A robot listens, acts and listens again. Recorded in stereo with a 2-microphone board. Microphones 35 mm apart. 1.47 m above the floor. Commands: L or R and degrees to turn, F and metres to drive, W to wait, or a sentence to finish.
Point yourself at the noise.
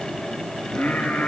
L60
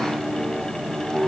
R10
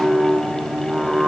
R10
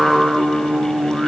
R20
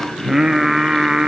R30
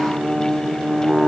Found it: singing, straight ahead.